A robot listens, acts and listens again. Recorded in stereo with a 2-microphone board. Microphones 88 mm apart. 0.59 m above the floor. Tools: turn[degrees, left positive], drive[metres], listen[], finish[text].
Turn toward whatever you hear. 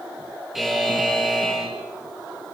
Action: turn[30]
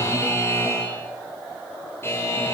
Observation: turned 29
Thought: So it is at 150° left.
Action: turn[150]
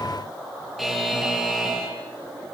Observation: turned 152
Action: finish[Found it: a buzzer, straight ahead, over 4 m away.]